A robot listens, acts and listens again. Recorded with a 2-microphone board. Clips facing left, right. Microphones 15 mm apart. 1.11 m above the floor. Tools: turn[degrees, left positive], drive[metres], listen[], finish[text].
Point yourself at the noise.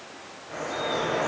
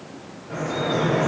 Thought: The dripping: about 35° right or 145° right.
Action: turn[-35]
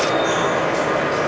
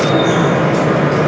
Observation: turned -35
Thought: So it is at 100° right.
Action: turn[-100]
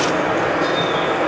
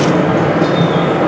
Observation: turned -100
Action: finish[Facing the dripping, 1 to 2 m away.]